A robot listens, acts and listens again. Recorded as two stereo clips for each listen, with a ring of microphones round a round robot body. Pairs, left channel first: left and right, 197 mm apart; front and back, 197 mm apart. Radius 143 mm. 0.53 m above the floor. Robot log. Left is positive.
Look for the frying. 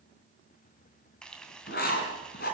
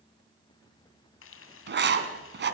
end: Facing the frying.